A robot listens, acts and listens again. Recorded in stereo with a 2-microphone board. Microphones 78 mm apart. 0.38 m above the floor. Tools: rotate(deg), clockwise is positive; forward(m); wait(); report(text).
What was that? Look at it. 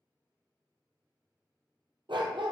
rotate(90)
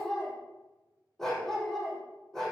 report("Facing the dog barking, over 4 m away.")